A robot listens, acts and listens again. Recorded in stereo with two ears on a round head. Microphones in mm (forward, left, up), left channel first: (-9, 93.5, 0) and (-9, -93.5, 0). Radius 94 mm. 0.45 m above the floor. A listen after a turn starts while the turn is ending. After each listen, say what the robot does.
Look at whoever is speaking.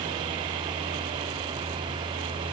Keep listening.
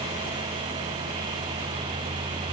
Keep listening.
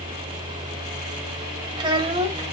Turn 30° right.
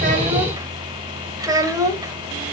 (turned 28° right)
Turn 15° right.
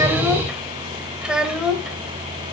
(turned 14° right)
Found it: a child speaking, straight ahead.